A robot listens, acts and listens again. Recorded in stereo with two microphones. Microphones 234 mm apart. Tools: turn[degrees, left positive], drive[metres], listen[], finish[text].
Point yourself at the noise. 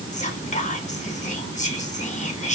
Thought: The whispering: about 30° left or 150° left.
Action: turn[30]
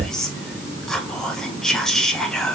Action: finish[Facing the whispering.]